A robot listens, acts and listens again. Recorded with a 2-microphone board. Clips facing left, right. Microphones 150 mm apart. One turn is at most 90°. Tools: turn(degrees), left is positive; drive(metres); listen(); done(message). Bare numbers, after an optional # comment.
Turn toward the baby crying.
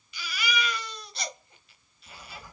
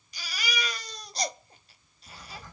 # The baby crying: about 40° right or 140° right.
turn(-40)
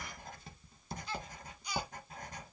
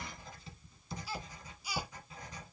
listen()
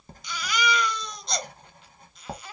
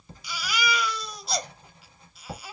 # So it is at 10° right.
turn(-10)
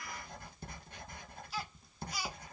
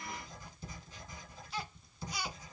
done("Facing the baby crying.")